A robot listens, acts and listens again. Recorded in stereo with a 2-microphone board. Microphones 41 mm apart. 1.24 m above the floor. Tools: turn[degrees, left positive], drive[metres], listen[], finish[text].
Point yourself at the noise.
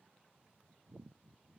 Action: listen[]
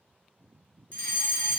Thought: The fire alarm: about 35° left or 145° left.
Action: turn[35]
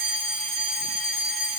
Action: finish[Found it: a fire alarm, straight ahead.]